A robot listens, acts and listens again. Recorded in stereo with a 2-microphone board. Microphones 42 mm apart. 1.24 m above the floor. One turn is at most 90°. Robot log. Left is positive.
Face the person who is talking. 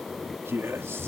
cmd yaw -90
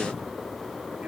cmd idle
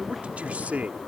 note: The man speaking is now 40° right.
cmd yaw -40
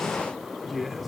end: Facing the man speaking.